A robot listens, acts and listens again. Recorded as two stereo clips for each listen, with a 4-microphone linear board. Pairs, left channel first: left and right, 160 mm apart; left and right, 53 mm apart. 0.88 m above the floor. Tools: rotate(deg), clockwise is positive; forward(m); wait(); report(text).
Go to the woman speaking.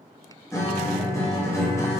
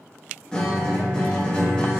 wait()
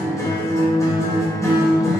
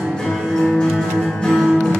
wait()
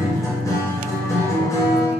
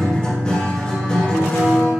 report("I can't make out a woman speaking, only a guitar.")